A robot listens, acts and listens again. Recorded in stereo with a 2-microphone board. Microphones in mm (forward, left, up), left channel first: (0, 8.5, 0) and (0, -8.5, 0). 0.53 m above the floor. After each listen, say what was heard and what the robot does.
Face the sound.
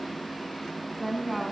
Turn 30° right.
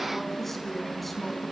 Facing the woman speaking, over 4 m away.